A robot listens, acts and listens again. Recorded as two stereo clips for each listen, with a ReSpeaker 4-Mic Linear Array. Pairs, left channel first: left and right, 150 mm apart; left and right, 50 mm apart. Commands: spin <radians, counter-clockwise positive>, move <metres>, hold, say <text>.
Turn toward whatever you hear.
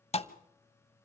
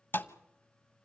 spin 0.79
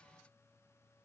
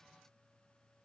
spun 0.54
hold
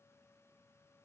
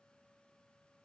say I heard a thud, but can't make it out now. It was about 15° left or 105° left.